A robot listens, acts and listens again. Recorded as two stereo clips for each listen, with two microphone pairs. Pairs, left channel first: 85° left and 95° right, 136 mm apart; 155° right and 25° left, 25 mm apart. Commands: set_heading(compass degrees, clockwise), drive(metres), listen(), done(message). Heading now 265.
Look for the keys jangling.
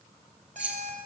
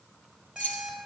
set_heading(75)
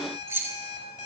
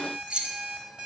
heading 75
set_heading(95)
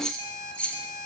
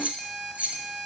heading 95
done("Found it: keys jangling, straight ahead, 2 to 4 m away.")